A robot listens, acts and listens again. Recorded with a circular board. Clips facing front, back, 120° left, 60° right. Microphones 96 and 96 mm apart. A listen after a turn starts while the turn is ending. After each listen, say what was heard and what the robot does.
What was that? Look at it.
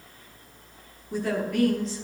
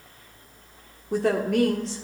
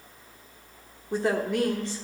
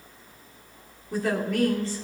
The woman speaking: 170° right. Turn 170° right.
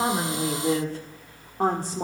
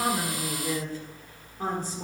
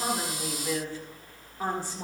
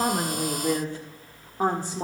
The woman speaking is now 10° right. Turn 10° right.
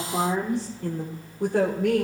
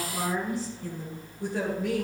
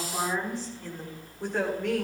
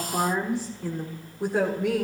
The woman speaking is now 15° left. Turn 15° left.
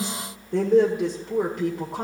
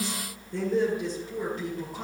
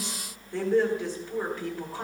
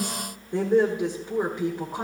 Found it: a woman speaking, straight ahead, 1 to 2 m away.